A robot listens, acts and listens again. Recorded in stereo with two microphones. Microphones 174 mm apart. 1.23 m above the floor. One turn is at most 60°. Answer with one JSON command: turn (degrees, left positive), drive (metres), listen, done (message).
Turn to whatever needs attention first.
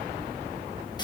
{"listen": true}
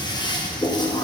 {"listen": true}
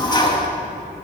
{"done": "I can't make out anything urgent to turn to."}